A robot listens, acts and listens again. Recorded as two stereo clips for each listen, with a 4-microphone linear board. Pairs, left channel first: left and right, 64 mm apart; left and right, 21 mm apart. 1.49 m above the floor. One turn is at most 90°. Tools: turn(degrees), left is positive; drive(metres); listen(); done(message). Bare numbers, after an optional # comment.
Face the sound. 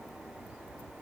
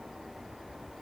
listen()
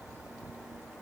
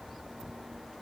listen()
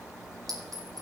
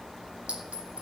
turn(-90)
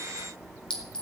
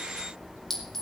# So it is at 15° left.
turn(15)
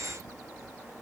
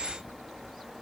listen()
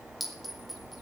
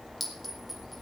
done("Found it: a clink, straight ahead, over 4 m away.")